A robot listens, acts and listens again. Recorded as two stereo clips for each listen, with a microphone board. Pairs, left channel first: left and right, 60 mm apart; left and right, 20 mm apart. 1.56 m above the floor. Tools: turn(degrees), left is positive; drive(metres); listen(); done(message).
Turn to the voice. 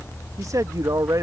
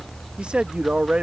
turn(degrees=-70)
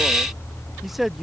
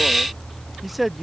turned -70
done("Facing the man speaking.")